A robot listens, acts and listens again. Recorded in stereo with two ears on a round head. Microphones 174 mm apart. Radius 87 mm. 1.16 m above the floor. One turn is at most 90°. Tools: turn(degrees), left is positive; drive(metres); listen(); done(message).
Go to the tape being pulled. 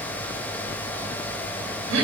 listen()
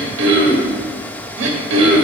listen()
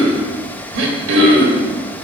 done("I can't make out tape being pulled to turn to.")